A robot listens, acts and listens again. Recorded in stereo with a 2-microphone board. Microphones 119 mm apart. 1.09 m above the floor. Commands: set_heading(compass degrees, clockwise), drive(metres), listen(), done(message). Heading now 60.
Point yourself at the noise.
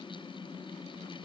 listen()
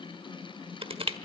set_heading(110)
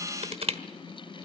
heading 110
set_heading(175)
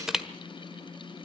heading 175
done("Facing the crushing, 1 to 2 m away.")